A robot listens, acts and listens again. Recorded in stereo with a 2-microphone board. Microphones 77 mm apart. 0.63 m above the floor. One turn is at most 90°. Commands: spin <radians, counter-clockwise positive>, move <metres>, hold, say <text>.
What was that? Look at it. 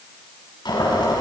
spin 1.31
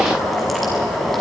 say Found it: boiling, straight ahead.